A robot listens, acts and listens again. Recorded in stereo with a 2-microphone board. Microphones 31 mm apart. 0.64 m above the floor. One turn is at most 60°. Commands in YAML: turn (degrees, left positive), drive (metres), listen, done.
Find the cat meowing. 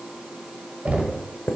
listen: true
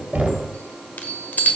listen: true
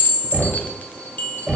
done: "I can't make out a cat meowing, only knocking and a chime."